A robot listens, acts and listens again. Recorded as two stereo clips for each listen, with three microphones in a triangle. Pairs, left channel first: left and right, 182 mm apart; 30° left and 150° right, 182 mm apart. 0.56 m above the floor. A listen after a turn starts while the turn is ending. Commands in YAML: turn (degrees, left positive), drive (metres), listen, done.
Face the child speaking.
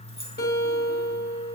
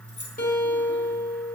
listen: true
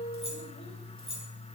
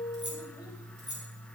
listen: true
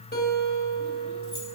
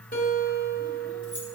done: "I can't make out a child speaking, only a guitar."